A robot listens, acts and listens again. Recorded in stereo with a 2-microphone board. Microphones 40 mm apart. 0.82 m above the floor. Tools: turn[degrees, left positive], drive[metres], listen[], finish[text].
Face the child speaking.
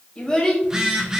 Thought: The child speaking: about 15° left or 165° left.
Action: turn[15]
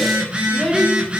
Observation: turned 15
Thought: So it is at 15° right.
Action: turn[-15]
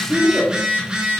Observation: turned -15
Thought: The child speaking is now 15° right.
Action: turn[-15]
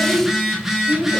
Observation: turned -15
Thought: The child speaking is now 25° right.
Action: turn[-25]
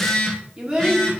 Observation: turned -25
Thought: The child speaking is now 15° right.
Action: turn[-15]
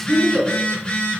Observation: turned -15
Thought: The child speaking is now 20° right.
Action: turn[-20]
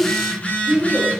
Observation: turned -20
Thought: The child speaking is now 10° right.
Action: turn[-10]
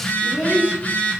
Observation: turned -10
Action: finish[Facing the child speaking.]